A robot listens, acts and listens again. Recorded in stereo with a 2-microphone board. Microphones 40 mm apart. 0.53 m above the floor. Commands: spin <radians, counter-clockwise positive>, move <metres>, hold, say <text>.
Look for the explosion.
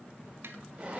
hold
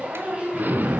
spin -0.87
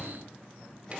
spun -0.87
hold
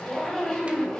say I heard an explosion, but can't make it out now. It was about straight ahead or 80° right.